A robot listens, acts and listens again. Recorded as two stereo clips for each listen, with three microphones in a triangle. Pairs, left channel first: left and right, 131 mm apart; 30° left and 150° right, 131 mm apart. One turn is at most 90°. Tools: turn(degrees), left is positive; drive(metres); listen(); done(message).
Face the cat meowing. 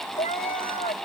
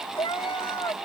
turn(degrees=85)
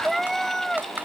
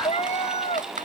done("Found it: a cat meowing, straight ahead.")